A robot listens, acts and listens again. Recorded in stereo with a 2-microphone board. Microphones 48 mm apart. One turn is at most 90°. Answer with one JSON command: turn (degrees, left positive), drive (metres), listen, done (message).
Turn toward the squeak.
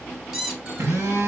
{"turn": -30}
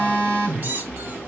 {"turn": -90}
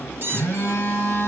{"turn": -50}
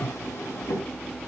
{"listen": true}
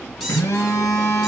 {"listen": true}
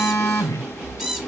{"done": "Found it: a squeak, straight ahead, 2 to 4 m away."}